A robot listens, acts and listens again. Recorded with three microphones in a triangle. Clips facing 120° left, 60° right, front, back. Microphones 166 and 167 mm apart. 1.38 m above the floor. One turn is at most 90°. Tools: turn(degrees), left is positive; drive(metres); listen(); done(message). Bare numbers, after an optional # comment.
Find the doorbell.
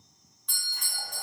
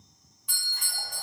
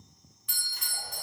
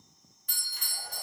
# The doorbell: 140° right.
turn(-90)
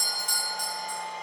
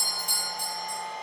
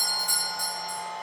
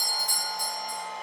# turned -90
# The doorbell is now 75° right.
turn(-75)
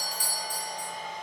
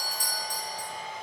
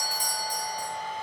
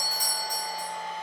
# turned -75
# The doorbell is now 20° right.
turn(-20)
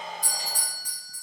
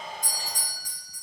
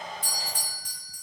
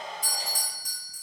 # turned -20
done("Found it: a doorbell, straight ahead, under 1 m away.")